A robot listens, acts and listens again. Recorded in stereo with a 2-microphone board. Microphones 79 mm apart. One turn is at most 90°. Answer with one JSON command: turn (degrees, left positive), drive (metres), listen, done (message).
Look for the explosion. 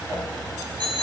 {"listen": true}
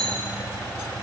{"listen": true}
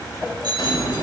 {"turn": 75}
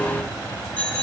{"listen": true}
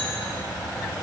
{"done": "I heard an explosion, but can't make it out now. It was about straight ahead or 30° left."}